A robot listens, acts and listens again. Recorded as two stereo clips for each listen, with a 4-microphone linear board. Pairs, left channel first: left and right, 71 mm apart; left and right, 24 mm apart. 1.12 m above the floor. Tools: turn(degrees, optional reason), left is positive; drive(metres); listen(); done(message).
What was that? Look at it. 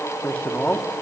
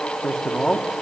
turn(degrees=15, reason="The man speaking: about 15° left or 165° left.")
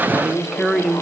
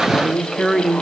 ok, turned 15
turn(degrees=-30)
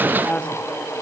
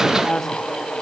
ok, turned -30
turn(degrees=15, reason="So it is at 15° left.")
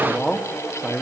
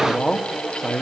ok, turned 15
done("Facing the man speaking.")